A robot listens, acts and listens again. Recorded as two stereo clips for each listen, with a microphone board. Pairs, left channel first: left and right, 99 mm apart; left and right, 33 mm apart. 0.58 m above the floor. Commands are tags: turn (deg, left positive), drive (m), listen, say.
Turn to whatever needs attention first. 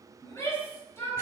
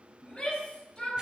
<turn deg="30"/>
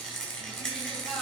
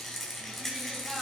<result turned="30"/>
<listen/>
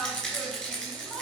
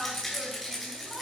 <say>Facing the shout.</say>